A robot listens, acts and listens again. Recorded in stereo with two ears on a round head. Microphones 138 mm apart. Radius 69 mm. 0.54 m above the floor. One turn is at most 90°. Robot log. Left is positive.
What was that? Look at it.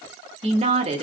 note: The woman speaking: about 40° right or 140° right.
cmd yaw -40
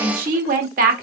note: So it is at 90° right.
cmd yaw -90
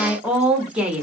note: The woman speaking is now 10° right.
cmd yaw -10
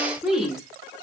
end: Facing the woman speaking, 1 to 2 m away.